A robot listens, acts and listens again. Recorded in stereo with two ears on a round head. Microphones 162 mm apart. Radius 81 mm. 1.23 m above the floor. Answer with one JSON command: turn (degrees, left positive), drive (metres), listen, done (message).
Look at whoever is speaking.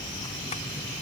{"listen": true}
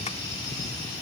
{"listen": true}
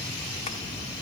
{"done": "I can't make out anyone speaking."}